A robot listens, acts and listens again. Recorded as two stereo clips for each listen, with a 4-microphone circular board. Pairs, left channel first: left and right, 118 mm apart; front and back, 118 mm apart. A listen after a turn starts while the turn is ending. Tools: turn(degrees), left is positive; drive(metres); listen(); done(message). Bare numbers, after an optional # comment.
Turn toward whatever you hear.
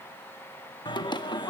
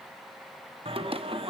# The singing: 140° left.
turn(140)
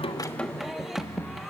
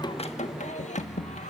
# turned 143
done("Facing the singing.")